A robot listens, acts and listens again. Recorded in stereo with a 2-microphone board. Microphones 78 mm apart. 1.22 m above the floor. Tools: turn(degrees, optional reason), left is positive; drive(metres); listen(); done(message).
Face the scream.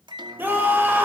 turn(degrees=-25, reason="The scream: about 25° right or 155° right.")
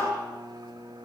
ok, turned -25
listen()
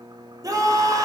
turn(degrees=-130, reason="So it is at 130° right.")
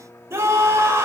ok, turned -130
turn(degrees=-35, reason="The scream is now 35° right.")
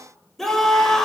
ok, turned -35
done("Found it: a scream, straight ahead, over 4 m away.")